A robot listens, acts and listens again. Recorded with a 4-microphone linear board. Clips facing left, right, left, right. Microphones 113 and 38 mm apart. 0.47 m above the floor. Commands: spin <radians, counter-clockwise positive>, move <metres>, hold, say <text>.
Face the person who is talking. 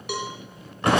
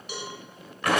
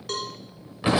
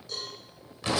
hold
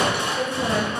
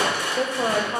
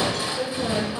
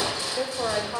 spin -1.05
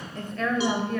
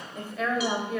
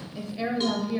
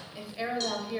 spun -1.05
spin -0.17
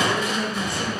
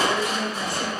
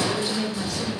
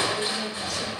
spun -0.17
say Found it: a woman speaking, straight ahead.